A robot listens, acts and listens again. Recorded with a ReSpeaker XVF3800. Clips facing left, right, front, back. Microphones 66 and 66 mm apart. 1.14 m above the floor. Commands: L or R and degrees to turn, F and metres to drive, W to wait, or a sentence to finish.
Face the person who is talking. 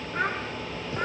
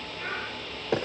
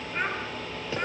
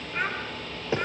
L90
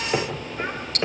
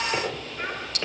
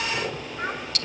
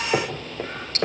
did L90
W
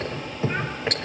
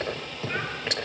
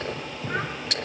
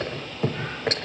W
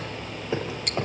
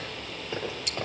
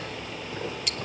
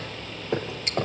Facing where the child speaking came from. I can't hear it now.